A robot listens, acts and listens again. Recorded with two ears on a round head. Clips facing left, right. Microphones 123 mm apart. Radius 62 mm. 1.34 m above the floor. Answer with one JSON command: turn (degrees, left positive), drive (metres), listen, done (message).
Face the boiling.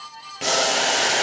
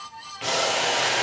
{"turn": 50}
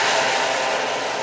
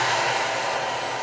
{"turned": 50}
{"turn": 75}
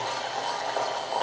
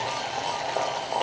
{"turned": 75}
{"turn": -15}
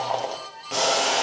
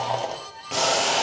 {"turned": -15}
{"done": "Found it: boiling, straight ahead."}